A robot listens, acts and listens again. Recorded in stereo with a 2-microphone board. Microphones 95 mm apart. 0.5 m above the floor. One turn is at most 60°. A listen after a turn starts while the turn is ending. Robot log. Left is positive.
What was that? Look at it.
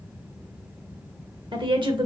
note: The woman speaking: about 60° right or 120° right.
cmd yaw -60
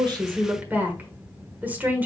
note: So it is at 20° right.
cmd yaw -20
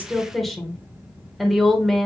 end: Found it: a woman speaking, straight ahead, 1 to 2 m away.